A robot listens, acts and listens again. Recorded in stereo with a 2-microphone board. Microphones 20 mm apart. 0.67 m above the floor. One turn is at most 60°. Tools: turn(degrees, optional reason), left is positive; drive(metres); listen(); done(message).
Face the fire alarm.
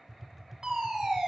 turn(degrees=-55, reason="The fire alarm: about 55° right or 125° right.")
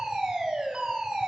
turn(degrees=-60, reason="So it is at 60° right.")
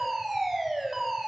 turn(degrees=-10, reason="The fire alarm is now 10° right.")
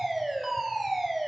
done("Found it: a fire alarm, straight ahead.")